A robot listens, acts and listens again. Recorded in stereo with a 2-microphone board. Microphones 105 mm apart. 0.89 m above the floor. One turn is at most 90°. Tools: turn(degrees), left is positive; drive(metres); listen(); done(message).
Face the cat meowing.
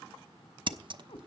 turn(degrees=55)
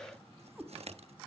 turn(degrees=-15)
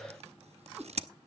turn(degrees=-10)
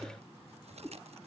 turn(degrees=-15)
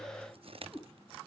done("Facing the cat meowing, 2 to 4 m away.")